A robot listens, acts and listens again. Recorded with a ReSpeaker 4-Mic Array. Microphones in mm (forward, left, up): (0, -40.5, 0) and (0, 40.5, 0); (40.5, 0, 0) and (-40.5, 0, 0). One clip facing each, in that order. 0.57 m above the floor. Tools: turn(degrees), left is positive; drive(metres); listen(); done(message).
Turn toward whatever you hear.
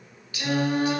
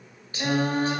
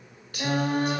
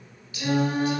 turn(degrees=35)
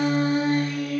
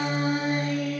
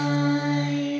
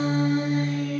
turn(degrees=15)
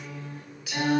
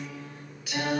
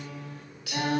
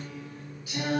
done("Found it: singing, straight ahead, 2 to 4 m away.")